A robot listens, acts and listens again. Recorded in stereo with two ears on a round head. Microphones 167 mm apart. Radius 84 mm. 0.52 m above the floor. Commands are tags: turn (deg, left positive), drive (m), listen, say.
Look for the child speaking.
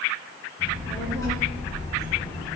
<turn deg="25"/>
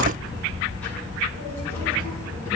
<turn deg="20"/>
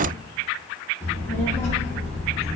<turn deg="20"/>
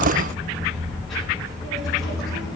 <say>Found it: a child speaking, straight ahead, 2 to 4 m away.</say>